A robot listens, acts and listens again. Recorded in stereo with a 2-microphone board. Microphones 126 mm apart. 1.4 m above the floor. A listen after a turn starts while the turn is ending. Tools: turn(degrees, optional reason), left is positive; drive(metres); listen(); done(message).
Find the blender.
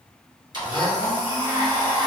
turn(degrees=-35, reason="The blender: about 35° right or 145° right.")
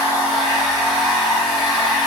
done("Found it: a blender, straight ahead.")